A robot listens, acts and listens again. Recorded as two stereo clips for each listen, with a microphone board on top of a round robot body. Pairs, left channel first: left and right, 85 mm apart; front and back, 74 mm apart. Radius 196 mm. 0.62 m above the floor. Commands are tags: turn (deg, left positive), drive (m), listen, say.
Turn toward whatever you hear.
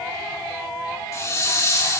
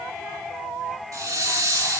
<turn deg="140"/>
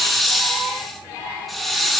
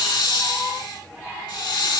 <say>Facing the hiss.</say>